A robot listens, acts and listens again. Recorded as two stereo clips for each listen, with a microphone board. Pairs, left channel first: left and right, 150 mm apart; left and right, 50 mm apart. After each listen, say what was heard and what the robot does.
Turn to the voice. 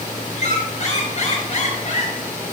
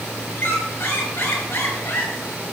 Keep listening.
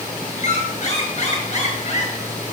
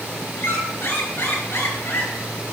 Keep listening.
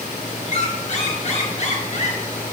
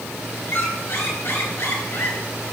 I can't make out anyone speaking, only a squeak.